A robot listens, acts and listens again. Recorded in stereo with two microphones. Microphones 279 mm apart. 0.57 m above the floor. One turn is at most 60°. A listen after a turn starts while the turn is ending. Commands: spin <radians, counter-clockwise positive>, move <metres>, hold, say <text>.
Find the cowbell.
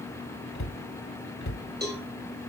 spin -0.61
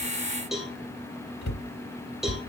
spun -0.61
say Facing the cowbell, 2 to 4 m away.